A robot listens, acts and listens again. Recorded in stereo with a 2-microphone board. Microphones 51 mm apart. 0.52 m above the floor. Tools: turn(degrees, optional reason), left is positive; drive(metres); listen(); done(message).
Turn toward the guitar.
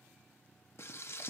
listen()
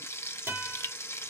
turn(degrees=-45, reason="The guitar: about 45° right or 135° right.")
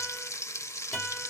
done("Facing the guitar, over 4 m away.")